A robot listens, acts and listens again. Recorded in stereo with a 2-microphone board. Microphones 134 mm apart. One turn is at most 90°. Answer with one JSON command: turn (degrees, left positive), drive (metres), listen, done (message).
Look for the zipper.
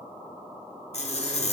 {"turn": 50}
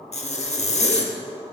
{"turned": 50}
{"turn": 65}
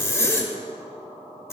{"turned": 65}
{"turn": 20}
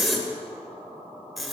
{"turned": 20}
{"done": "Facing the zipper."}